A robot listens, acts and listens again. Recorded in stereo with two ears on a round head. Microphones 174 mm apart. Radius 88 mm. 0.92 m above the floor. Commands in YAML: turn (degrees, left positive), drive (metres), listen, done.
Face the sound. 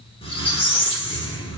turn: 30
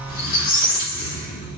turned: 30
turn: 115
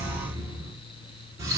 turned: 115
turn: -20
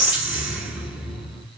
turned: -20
done: "Found it: a squeak, straight ahead, 1 to 2 m away."